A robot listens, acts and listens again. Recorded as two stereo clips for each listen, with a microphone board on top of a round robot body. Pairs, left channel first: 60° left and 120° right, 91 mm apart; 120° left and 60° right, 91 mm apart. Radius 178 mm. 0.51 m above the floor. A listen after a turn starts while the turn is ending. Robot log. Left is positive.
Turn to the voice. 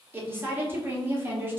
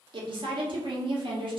note: The woman speaking: 55° right.
cmd yaw -55
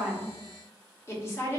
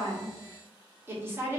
end: Facing the woman speaking.